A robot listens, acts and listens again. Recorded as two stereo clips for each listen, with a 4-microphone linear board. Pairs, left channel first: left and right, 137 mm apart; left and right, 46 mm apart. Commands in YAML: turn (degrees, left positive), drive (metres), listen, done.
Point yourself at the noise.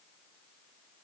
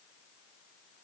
listen: true
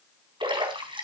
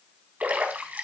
turn: -35
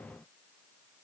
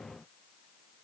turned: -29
listen: true
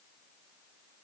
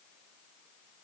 done: "I heard a splash, but can't make it out now. It was about 10° right or 115° right."